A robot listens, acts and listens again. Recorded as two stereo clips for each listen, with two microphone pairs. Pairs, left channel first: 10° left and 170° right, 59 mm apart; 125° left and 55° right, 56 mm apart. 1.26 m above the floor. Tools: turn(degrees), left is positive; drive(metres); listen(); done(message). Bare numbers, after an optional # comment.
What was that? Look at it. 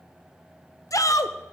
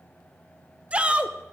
# The shout: 10° left.
turn(10)
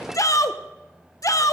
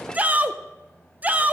done("Found it: a shout, straight ahead.")